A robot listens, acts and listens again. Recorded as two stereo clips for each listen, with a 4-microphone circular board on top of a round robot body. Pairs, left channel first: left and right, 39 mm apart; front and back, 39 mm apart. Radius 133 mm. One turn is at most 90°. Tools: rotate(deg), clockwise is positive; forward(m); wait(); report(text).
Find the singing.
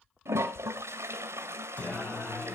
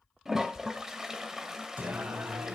rotate(-90)
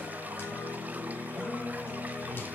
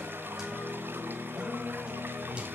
rotate(-90)
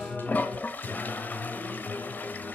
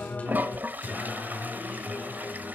rotate(-55)
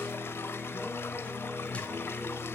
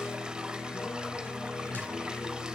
rotate(-30)
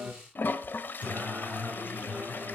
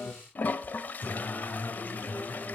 rotate(35)
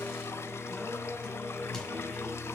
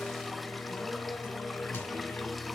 rotate(-10)
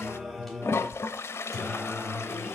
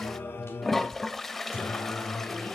report("Found it: singing, straight ahead.")